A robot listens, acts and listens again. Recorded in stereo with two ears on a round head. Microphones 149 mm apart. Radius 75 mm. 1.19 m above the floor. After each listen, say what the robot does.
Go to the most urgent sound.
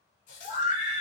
Turn 45° left.
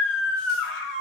Turn 95° left.
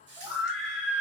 Drive 1.0 m forward.
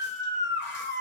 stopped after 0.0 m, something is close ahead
Turn 10° right.
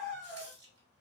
Something is in my way. I am facing the scream but have not reached it.